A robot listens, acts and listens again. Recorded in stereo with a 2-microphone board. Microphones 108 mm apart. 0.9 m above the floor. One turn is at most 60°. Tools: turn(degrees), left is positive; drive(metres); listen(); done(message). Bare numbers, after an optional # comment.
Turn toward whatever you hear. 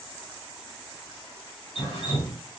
# The dripping: about 50° left or 130° left.
turn(50)
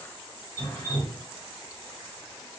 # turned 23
# So it is at 25° left.
turn(25)
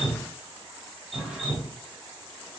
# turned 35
# The dripping is now 10° right.
turn(-10)
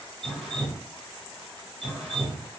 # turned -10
done("Found it: dripping, straight ahead, 1 to 2 m away.")